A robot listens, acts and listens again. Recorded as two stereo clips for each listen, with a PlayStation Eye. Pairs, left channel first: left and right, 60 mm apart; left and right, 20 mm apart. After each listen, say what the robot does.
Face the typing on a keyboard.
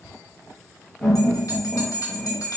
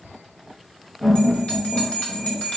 Keep listening.
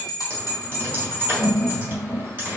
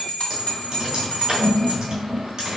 Turn 35° right.
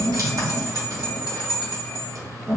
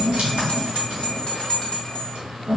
Turn 115° right.
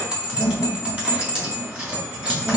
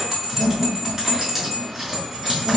Turn 30° right.
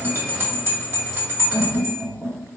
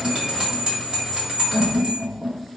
Keep listening.
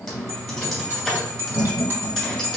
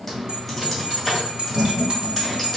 Found it: typing on a keyboard, straight ahead.